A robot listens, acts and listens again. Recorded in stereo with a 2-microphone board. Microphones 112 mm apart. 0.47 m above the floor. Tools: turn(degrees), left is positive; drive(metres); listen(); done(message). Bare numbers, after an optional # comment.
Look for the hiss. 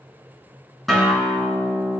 listen()
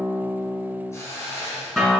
# The hiss: about 25° left or 155° left.
turn(25)
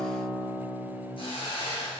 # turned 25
# So it is at 130° left.
turn(130)
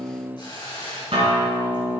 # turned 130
# The hiss is now 45° left.
turn(45)
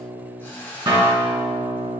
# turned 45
# The hiss is now 20° left.
turn(20)
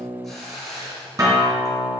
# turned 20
done("Found it: a hiss, straight ahead, 2 to 4 m away.")